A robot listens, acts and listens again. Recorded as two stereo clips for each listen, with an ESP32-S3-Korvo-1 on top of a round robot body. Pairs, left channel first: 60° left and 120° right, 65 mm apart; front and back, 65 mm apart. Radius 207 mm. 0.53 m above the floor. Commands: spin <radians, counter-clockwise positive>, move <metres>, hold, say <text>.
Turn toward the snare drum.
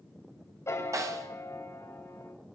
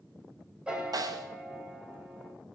spin -2.79
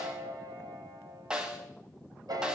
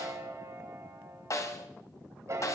spin -0.70
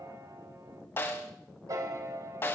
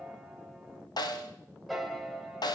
say Found it: a snare drum, straight ahead, 2 to 4 m away.